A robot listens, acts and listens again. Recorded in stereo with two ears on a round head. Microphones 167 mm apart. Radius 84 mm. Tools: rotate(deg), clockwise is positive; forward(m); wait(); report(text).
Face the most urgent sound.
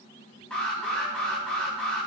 rotate(-30)
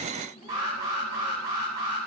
rotate(20)
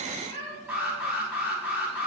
report("Facing the alarm.")